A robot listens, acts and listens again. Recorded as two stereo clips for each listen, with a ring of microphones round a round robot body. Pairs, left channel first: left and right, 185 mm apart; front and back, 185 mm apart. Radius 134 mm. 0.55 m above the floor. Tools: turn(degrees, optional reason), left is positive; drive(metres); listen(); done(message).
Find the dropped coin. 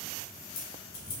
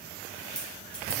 turn(degrees=85, reason="The dropped coin: 85° left.")
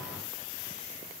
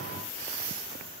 done("I heard a dropped coin from this way, but can't make it out now.")